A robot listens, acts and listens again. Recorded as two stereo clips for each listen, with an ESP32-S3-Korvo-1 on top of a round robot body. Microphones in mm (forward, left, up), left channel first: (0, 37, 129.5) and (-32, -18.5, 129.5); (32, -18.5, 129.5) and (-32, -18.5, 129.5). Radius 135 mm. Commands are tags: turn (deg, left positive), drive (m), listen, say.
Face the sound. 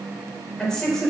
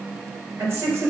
<turn deg="140"/>
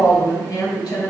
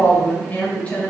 <turn deg="70"/>
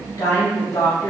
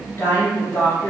<turn deg="50"/>
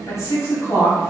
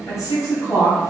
<turn deg="25"/>
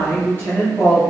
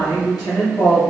<say>Facing the woman speaking.</say>